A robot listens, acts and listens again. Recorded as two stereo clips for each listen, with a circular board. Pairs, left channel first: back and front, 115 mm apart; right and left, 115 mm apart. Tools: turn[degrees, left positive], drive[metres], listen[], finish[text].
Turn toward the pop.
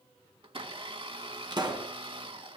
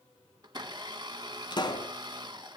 Thought: The pop: 45° right.
Action: turn[-45]
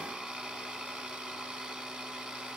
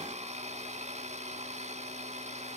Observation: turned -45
Action: finish[I heard a pop from this way, but can't make it out now.]